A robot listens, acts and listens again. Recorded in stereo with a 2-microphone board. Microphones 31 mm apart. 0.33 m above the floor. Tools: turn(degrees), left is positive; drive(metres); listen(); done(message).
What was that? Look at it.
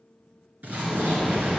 turn(degrees=-90)
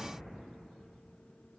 done("Facing where the explosion came from. I can't hear it now.")